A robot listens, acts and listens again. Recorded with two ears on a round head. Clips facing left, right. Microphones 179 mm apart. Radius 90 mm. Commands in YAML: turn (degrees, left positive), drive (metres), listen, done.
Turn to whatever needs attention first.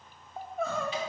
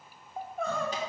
turn: 30
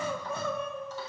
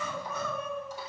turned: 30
turn: 150
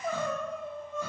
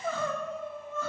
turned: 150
turn: 15
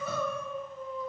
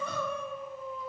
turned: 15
done: "Facing the crying, under 1 m away."